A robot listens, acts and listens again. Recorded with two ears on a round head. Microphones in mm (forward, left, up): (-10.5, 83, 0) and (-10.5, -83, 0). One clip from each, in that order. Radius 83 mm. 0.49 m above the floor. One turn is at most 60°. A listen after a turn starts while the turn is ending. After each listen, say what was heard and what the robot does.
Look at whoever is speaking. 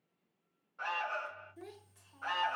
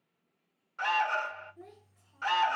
The child speaking: about 65° left or 115° left. Turn 60° left.
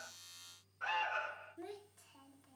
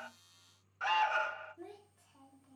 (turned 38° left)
So it is at 45° left. Turn 45° left.
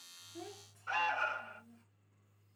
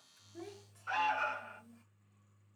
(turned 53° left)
Keep listening.
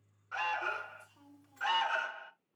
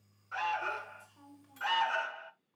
Found it: a child speaking, straight ahead, 1 to 2 m away.